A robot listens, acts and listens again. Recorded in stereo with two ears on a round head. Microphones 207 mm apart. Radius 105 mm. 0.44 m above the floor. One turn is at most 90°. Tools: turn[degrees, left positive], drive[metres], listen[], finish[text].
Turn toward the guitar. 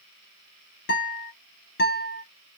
Thought: The guitar: about 50° left or 130° left.
Action: turn[50]
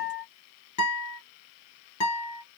Thought: So it is at 85° left.
Action: turn[85]
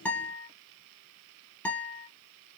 Action: finish[Found it: a guitar, straight ahead, 1 to 2 m away.]